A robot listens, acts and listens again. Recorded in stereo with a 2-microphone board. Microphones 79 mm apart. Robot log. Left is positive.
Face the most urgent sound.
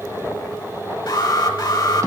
note: The alarm: about 60° left or 120° left.
cmd yaw +60
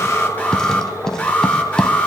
note: So it is at 20° left.
cmd yaw +20
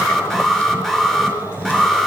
end: Facing the alarm.